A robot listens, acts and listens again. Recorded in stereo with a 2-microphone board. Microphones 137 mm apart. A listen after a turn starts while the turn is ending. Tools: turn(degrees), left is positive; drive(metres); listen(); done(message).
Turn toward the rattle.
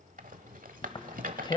turn(degrees=-70)
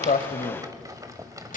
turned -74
turn(degrees=-25)
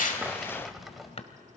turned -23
done("Found it: a rattle, straight ahead, 1 to 2 m away.")